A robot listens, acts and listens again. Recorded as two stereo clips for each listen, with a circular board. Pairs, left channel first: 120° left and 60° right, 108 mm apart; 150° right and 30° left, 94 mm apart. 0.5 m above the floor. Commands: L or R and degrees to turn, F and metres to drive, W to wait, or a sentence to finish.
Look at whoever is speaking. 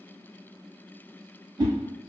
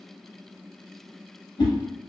W
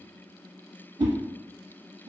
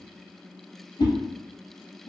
W
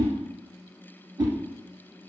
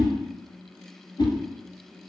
I can't make out anyone speaking, only a whoosh.